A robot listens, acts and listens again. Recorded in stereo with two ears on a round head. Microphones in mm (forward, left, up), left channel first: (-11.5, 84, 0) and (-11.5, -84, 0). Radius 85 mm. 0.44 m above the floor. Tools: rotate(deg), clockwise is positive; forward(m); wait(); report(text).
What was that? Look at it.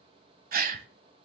rotate(50)
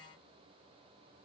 wait()
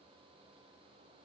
report("I heard a gasp, but can't make it out now. It was about straight ahead or 80° right.")